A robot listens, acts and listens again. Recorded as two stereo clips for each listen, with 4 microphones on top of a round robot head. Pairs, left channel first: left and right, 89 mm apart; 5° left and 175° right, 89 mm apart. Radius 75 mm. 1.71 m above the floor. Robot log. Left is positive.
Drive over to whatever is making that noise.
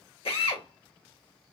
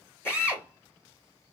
note: The drill: 70° left.
cmd yaw +70
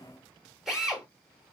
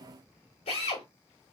cmd fwd 1.0
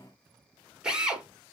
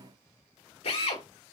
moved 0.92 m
note: The drill is now 10° right.
cmd yaw -10
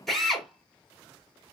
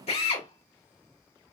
cmd fwd 1.0
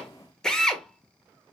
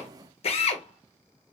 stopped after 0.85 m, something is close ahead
end: I am next to the drill.